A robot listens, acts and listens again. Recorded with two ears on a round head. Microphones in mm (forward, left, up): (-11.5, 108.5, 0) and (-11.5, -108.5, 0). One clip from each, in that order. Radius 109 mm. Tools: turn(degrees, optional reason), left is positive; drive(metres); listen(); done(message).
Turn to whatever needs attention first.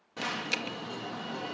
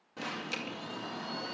turn(degrees=30, reason="The alarm: about 30° left or 150° left.")
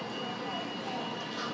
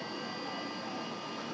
turn(degrees=120, reason="So it is at 120° left.")
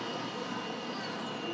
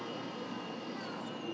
turn(degrees=45, reason="The alarm is now 45° left.")
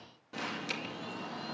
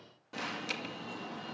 done("Found it: an alarm, straight ahead, 2 to 4 m away.")